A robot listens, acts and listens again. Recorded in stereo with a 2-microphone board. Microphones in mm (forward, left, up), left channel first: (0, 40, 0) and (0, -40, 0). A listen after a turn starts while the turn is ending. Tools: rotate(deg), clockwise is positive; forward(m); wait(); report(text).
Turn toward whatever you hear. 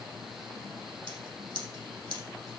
rotate(90)
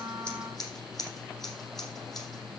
report("Facing the scissors, over 4 m away.")